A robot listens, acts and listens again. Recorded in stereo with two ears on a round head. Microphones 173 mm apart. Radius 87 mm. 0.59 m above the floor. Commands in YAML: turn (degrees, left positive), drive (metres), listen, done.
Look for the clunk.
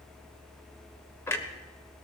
turn: 30
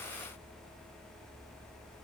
listen: true
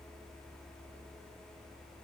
done: "I heard a clunk, but can't make it out now. It was about 15° right or 135° left."